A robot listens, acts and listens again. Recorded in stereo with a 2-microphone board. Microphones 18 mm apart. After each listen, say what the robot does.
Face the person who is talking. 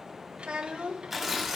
Turn 90° right.
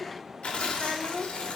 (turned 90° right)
Turn 15° right.
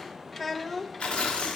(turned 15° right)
Found it: a child speaking, straight ahead.